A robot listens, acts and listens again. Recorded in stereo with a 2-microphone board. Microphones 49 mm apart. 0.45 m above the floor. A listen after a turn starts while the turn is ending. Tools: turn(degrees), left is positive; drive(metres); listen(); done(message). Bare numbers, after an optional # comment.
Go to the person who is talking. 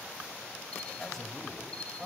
turn(30)
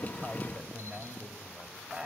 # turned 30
# So it is at 30° right.
turn(-30)
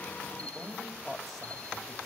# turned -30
drive(1.0)
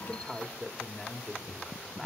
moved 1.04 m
drive(1.0)
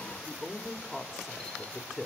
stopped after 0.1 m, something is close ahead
done("Arrived at the man speaking, straight ahead.")